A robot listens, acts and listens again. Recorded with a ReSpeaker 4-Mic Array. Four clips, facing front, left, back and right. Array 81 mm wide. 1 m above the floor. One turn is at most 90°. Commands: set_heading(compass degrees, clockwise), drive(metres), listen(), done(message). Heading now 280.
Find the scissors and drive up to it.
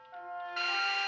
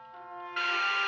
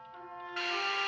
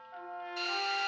listen()
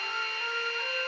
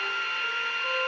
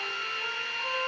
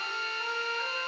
listen()
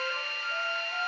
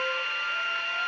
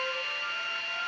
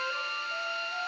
done("I can't make out scissors, only a drill and a trumpet.")